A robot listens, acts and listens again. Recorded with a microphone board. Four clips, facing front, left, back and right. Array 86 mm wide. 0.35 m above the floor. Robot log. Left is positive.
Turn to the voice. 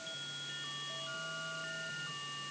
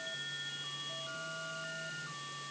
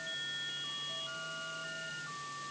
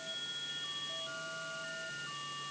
cmd idle
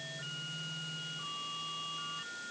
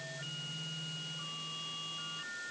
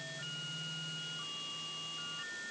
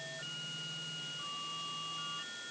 cmd idle
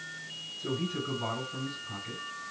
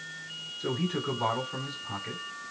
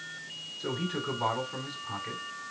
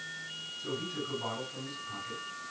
note: The man speaking: 125° left.
cmd yaw +125
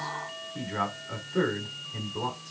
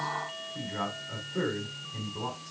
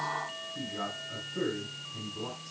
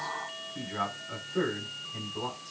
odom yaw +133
note: The man speaking is now 10° right.
cmd yaw -10
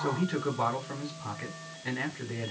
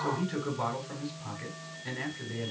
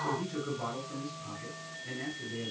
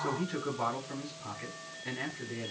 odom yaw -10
end: Found it: a man speaking, straight ahead.